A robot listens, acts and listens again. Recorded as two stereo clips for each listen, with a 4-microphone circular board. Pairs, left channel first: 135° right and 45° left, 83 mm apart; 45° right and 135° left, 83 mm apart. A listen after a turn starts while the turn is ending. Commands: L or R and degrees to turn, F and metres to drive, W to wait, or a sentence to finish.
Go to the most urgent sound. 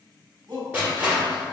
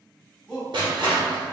L35
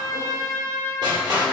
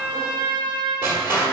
W
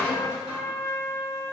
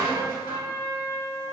W
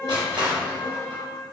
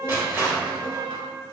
Facing where the shout came from. I can't hear it now. I did not reach it.